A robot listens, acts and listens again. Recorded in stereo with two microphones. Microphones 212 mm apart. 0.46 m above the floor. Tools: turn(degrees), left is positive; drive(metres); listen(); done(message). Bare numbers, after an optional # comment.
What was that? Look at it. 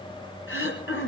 turn(90)
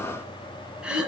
done("Found it: throat clearing, straight ahead, 2 to 4 m away.")